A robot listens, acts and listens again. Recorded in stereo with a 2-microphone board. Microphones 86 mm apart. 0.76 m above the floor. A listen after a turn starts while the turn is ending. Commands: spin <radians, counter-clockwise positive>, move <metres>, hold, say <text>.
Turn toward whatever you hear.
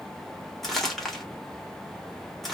spin 0.52
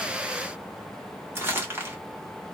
spin -0.44
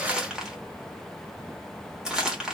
say Facing the crumpling.